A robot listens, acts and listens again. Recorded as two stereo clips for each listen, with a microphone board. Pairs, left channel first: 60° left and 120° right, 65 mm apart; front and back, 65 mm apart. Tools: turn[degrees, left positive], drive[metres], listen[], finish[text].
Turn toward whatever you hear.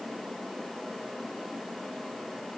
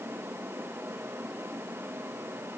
Action: listen[]
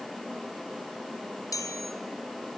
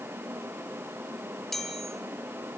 Thought: The chime: 85° left.
Action: turn[85]
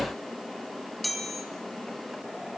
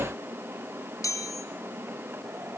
Thought: The chime is now 30° right.
Action: turn[-30]
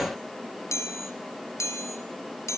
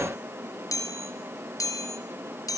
Thought: The chime is now 20° left.
Action: turn[20]
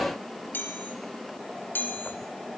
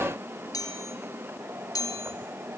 Action: finish[Facing the chime.]